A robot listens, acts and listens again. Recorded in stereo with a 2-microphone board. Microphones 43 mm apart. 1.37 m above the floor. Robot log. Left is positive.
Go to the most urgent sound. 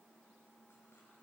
cmd idle
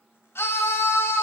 note: The scream: about 65° left or 115° left.
cmd yaw +65
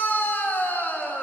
note: So it is at 45° left.
cmd yaw +45
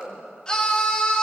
note: The scream is now 20° left.
cmd yaw +20
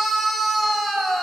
cmd fwd 1.0
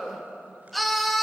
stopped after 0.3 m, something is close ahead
end: Blocked. The scream is further on, straight ahead.